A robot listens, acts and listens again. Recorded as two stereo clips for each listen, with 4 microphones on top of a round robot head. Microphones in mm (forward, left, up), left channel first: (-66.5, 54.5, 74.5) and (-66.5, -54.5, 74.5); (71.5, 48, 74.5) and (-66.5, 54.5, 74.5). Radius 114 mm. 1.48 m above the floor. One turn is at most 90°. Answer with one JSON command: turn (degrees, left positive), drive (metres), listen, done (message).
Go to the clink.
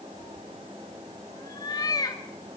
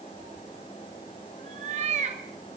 {"listen": true}
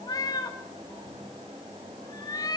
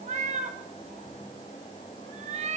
{"listen": true}
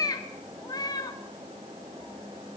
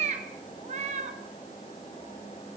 {"done": "I can't make out a clink to turn to."}